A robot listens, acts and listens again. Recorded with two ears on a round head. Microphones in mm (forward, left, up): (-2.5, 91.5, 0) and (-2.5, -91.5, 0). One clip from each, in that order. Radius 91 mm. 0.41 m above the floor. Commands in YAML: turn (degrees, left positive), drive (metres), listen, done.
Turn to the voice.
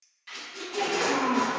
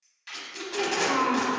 turn: -60
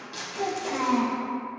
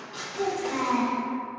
turn: -35
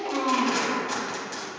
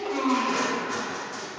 done: "Facing the child speaking."